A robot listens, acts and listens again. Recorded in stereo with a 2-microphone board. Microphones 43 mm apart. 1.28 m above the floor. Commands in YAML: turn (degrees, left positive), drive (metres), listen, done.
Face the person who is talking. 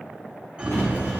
turn: 30
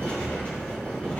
turn: 110
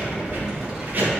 turn: -20
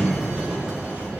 listen: true
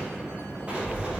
turn: -15
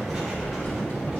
done: "Found it: a child speaking, straight ahead."